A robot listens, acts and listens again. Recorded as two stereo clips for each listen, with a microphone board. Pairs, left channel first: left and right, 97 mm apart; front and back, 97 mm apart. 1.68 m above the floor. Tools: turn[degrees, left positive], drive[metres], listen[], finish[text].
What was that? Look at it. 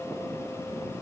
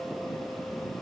Action: listen[]
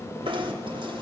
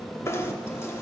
Thought: The knocking: 60° right.
Action: turn[-60]
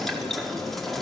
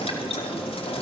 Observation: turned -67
Action: finish[Facing the knocking.]